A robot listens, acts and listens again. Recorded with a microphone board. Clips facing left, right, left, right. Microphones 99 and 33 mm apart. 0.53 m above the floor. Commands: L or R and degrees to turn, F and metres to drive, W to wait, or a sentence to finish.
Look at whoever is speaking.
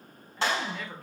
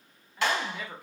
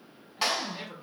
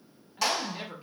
R30
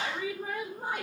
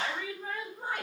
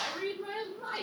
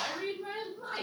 L20
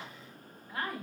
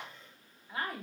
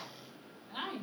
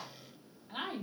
Found it: a woman speaking, straight ahead.